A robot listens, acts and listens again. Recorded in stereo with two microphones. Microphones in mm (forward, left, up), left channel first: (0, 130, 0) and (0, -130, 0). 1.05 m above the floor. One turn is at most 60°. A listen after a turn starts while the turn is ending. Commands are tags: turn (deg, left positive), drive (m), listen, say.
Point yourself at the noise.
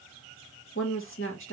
<turn deg="50"/>
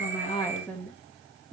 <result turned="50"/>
<say>Facing the woman speaking.</say>